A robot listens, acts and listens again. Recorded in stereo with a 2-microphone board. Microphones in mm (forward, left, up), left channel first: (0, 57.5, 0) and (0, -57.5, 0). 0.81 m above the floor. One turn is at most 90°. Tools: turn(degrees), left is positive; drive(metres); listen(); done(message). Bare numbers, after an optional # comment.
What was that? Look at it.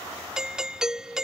turn(-30)
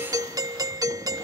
# So it is at 145° right.
turn(-90)
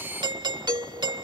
# The doorbell is now 45° right.
turn(-45)
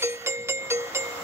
# The doorbell is now 25° right.
turn(-25)
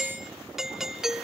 done("Found it: a doorbell, straight ahead.")